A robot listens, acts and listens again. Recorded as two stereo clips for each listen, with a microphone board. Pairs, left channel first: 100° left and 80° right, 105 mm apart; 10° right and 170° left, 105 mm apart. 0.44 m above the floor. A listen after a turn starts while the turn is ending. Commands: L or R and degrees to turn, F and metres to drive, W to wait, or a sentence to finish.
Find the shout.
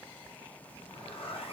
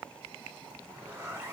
W
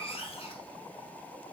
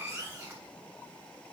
W
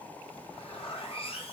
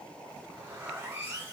I can't make out a shout to turn to.